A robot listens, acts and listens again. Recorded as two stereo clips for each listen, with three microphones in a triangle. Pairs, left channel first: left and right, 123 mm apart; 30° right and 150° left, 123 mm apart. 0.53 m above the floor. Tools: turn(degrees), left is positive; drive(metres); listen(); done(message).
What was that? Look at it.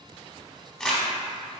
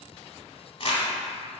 done("Found it: crumpling, straight ahead, under 1 m away.")